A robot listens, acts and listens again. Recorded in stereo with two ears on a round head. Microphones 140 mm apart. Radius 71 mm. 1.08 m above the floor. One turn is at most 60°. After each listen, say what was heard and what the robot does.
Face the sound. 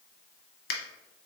The finger snap: about 70° left or 110° left. Turn 60° left.
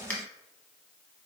So it is at 10° left. Turn 10° left.
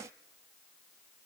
Keep listening.
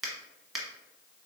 Found it: a finger snap, straight ahead, under 1 m away.